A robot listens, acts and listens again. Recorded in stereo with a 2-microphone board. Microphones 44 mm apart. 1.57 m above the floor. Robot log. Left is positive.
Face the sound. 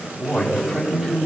cmd yaw -30
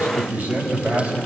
note: So it is at 145° right.
cmd yaw -145
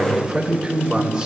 note: The man speaking is now 10° right.
cmd yaw -10
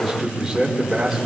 end: Facing the man speaking.